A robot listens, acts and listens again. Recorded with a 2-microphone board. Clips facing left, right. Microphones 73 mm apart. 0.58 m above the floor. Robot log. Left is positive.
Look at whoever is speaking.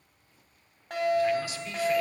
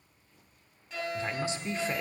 note: The man speaking: about 30° right or 150° right.
cmd yaw -30
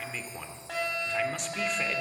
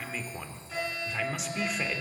end: Found it: a man speaking, straight ahead, 1 to 2 m away.